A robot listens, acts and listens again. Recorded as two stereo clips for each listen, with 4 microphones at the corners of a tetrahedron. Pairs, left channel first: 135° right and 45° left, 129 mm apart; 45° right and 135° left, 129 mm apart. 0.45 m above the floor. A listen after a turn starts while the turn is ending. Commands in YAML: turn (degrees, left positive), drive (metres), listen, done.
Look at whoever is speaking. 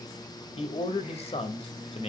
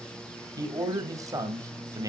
turn: -165
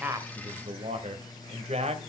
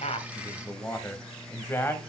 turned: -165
turn: 25
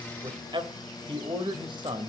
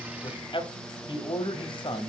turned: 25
done: "Found it: a man speaking, straight ahead."